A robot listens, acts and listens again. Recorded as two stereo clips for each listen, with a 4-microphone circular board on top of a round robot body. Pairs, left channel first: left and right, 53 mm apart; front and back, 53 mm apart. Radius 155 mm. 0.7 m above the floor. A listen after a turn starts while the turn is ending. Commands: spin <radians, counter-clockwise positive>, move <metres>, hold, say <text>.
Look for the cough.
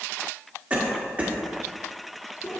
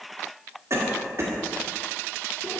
spin -2.62
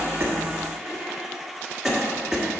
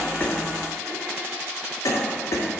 say Facing the cough, 1 to 2 m away.